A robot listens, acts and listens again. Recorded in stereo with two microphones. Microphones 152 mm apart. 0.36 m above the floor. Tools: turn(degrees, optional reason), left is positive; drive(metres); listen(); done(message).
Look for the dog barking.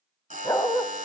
turn(degrees=15, reason="The dog barking: about 15° left or 165° left.")
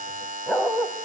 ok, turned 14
done("Facing the dog barking.")